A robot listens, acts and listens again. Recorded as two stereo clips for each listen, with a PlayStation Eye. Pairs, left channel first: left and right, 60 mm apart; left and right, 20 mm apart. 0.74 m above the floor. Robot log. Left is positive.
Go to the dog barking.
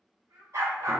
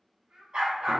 note: The dog barking: about 55° right or 125° right.
cmd yaw -55
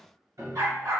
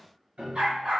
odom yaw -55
note: So it is at 70° right.
cmd yaw -70
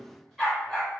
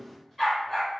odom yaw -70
cmd fwd 1.0
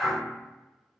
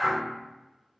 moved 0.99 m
cmd fwd 1.0
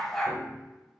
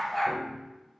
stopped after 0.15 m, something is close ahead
end: I am next to the dog barking.